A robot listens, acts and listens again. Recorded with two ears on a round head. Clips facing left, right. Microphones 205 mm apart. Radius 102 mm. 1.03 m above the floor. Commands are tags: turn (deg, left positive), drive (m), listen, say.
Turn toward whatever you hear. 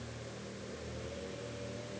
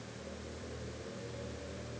<listen/>
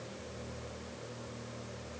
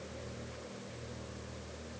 <listen/>
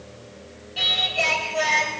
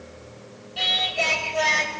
<turn deg="30"/>
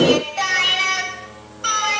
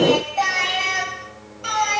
<turn deg="160"/>
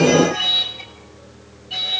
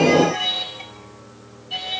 <turn deg="10"/>
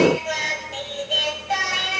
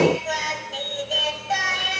<say>Found it: singing, straight ahead.</say>